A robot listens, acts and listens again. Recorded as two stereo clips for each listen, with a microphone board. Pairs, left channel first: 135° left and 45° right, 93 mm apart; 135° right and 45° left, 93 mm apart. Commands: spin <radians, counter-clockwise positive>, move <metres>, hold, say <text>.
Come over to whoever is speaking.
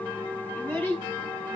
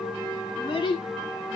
spin -2.71
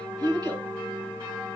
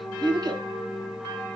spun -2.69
move 1.0
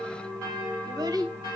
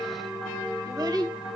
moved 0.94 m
move 1.0
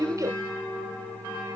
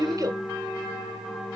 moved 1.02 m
move 1.0
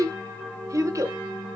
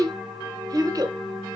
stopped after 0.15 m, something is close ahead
say I am next to the child speaking.